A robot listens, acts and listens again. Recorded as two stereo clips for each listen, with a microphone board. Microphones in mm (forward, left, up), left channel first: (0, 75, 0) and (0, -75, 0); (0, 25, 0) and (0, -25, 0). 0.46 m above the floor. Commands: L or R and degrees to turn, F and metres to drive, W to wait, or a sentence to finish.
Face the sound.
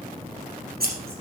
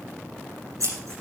R90
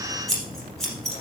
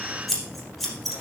Found it: scissors, straight ahead, 2 to 4 m away.